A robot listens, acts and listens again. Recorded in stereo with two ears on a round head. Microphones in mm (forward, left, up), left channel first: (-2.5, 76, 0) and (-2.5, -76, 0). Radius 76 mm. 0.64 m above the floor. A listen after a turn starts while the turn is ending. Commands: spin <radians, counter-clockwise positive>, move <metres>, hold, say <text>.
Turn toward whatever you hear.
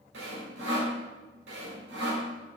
spin -1.22
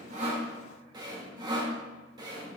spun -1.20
spin -0.44
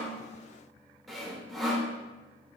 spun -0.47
say Facing the sawing.